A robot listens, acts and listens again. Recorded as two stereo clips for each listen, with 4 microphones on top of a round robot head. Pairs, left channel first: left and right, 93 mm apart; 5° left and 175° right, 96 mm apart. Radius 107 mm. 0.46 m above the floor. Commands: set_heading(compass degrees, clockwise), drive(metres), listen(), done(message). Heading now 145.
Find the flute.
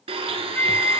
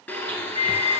set_heading(125)
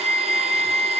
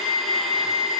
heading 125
done("Found it: a flute, straight ahead, under 1 m away.")